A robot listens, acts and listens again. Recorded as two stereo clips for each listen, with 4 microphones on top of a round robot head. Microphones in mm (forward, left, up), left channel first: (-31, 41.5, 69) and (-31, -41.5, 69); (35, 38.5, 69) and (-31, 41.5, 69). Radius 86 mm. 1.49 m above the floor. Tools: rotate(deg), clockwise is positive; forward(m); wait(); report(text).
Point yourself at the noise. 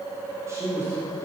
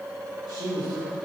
rotate(145)
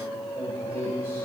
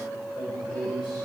rotate(20)
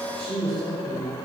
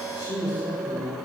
report("Found it: a man speaking, straight ahead, over 4 m away.")